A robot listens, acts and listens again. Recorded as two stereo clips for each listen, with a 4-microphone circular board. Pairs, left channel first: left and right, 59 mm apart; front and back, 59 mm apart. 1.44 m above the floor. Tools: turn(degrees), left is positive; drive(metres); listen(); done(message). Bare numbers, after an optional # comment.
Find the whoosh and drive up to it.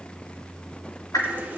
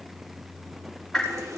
# The whoosh: 85° left.
turn(85)
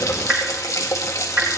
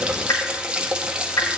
# The whoosh is now 15° right.
turn(-15)
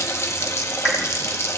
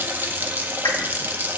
listen()
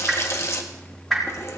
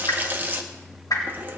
drive(1.0)
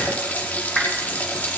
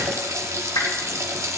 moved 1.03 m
drive(1.0)
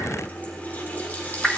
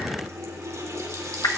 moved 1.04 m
drive(1.0)
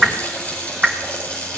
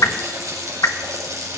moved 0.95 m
drive(1.0)
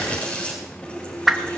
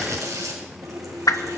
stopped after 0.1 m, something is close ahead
done("Arrived at the whoosh, straight ahead.")